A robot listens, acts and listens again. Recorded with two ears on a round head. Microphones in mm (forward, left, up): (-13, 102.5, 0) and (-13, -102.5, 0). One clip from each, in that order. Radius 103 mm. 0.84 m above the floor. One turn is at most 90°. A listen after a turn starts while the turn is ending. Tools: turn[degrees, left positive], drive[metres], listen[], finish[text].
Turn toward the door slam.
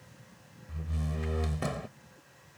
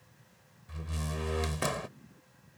Thought: The door slam: about 50° right or 130° right.
Action: turn[-50]
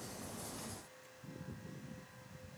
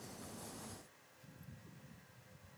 Action: listen[]
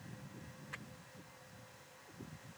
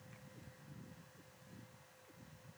Action: finish[I heard a door slam, but can't make it out now. It was about straight ahead or 80° right.]